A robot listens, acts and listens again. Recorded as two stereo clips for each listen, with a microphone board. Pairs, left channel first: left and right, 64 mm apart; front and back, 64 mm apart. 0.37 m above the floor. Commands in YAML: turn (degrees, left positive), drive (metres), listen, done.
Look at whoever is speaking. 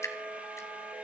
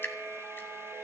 listen: true
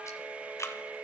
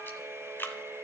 listen: true
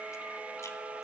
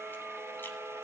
done: "I can't make out anyone speaking to turn to."